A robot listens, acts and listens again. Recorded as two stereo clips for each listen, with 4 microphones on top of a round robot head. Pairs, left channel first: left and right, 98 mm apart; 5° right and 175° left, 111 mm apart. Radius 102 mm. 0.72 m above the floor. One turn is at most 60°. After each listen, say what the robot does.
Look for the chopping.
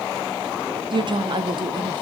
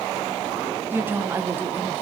Keep listening.
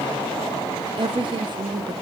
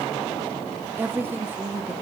Keep listening.
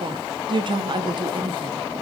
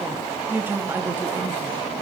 I can't make out chopping to turn to.